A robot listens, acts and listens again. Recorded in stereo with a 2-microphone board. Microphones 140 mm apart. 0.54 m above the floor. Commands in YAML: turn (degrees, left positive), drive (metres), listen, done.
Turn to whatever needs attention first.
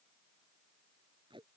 listen: true
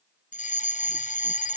turn: 65
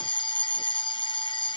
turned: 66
turn: 40
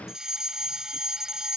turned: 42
done: "Facing the fire alarm."